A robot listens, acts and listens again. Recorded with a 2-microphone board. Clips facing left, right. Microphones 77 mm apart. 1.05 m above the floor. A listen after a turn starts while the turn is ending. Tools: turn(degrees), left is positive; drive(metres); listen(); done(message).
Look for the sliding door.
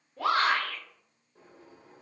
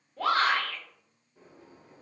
turn(degrees=60)
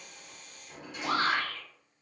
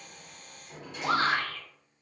done("Facing the sliding door.")